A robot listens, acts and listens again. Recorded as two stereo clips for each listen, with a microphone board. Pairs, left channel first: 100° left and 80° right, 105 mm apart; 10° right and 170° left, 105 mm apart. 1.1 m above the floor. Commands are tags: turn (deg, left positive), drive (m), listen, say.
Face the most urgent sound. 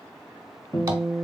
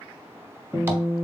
<listen/>
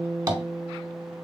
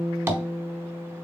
<listen/>
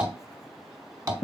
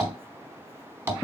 <say>I can't make out anything urgent to turn to.</say>